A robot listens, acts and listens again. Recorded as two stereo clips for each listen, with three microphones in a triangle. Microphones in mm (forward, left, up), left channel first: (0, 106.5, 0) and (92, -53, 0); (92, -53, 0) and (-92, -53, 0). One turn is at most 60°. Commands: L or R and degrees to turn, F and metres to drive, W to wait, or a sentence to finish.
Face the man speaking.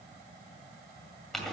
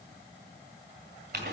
W
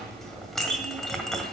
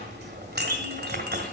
W
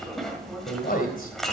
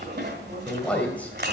L60
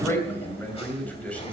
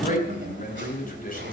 L40
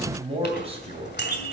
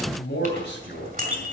Facing the man speaking, 2 to 4 m away.